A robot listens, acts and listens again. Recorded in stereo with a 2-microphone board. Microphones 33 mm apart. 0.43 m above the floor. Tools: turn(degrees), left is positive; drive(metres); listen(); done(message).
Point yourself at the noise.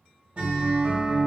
turn(degrees=-45)
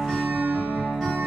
done("Found it: a guitar, straight ahead.")